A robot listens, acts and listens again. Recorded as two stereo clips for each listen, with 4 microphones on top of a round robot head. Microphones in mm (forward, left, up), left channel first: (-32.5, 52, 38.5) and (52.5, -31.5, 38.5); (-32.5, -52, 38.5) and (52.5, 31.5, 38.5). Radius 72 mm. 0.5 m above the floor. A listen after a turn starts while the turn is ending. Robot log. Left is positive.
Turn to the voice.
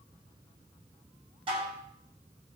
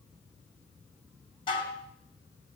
cmd idle
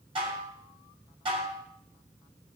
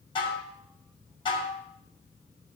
cmd idle
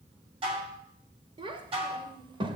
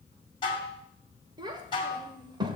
end: Facing the child speaking, 1 to 2 m away.